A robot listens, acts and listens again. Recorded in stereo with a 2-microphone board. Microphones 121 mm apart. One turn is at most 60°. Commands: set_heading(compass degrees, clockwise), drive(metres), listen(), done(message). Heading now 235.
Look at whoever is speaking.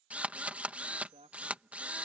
set_heading(295)
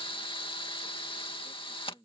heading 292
set_heading(322)
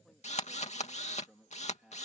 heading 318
done("Facing the man speaking.")